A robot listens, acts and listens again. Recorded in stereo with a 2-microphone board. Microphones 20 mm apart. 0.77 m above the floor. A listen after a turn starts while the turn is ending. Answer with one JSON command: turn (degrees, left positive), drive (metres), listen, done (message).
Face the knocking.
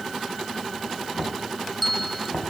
{"turn": 55}
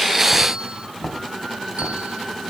{"turn": 70}
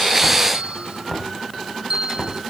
{"turn": 15}
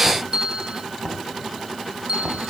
{"done": "Found it: knocking, straight ahead, 2 to 4 m away."}